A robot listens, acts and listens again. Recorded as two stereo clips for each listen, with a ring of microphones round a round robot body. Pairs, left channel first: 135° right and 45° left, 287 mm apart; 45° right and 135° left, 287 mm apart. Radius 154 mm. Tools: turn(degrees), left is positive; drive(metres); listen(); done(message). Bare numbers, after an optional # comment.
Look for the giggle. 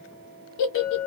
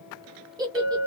# The giggle: 150° right.
turn(-150)
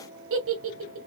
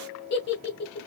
done("Facing the giggle, under 1 m away.")